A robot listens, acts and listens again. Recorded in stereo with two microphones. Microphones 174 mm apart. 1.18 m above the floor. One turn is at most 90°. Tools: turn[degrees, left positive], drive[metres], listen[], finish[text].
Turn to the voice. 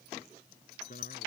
Thought: The man speaking: about 55° left or 125° left.
Action: turn[55]
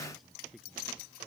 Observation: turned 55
Action: finish[Found it: a man speaking, straight ahead.]